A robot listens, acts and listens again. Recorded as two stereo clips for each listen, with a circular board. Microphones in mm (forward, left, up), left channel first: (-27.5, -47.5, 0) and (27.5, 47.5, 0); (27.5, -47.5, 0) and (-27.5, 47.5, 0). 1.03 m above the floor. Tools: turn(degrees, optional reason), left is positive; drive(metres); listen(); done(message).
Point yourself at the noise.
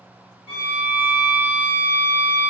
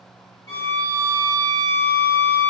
done("Found it: a violin, straight ahead, under 1 m away.")